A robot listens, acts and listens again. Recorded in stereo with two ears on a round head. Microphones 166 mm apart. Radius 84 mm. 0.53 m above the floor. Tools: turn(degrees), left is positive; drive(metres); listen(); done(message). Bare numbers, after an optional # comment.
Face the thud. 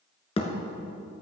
# The thud: about 30° left or 150° left.
turn(30)
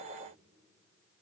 listen()
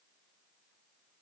done("I heard a thud, but can't make it out now. It was about straight ahead or 120° left.")